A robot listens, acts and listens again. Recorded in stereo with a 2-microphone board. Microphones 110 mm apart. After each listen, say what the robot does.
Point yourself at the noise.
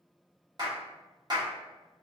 Turn 40° right.
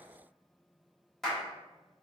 Found it: a clap, straight ahead.